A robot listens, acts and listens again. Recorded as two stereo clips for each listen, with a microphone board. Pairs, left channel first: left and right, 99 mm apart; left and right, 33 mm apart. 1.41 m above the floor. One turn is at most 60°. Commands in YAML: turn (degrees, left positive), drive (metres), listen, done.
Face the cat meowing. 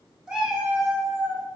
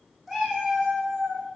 turn: -15
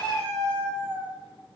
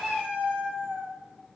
turn: -60
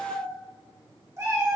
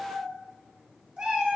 turn: -30
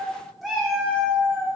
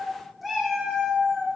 done: "Facing the cat meowing."